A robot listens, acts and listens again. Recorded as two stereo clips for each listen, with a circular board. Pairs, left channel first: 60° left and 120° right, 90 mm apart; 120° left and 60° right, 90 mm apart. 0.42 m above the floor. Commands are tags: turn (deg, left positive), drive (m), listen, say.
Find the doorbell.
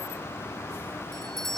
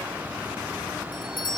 <turn deg="145"/>
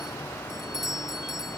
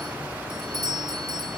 <turn deg="-35"/>
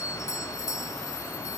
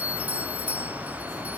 <turn deg="10"/>
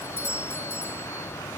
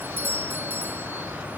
<say>Facing the doorbell.</say>